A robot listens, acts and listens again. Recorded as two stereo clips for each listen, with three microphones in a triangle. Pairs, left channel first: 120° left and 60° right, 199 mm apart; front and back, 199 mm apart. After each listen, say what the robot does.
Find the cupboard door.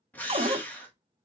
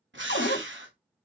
Facing the cupboard door.